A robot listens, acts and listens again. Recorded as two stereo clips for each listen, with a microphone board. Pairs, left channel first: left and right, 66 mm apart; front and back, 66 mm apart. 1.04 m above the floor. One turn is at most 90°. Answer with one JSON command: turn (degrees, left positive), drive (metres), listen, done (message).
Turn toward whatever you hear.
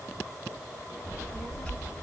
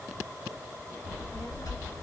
{"turn": 25}
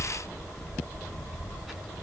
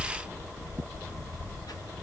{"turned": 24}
{"done": "Facing the child speaking, 1 to 2 m away."}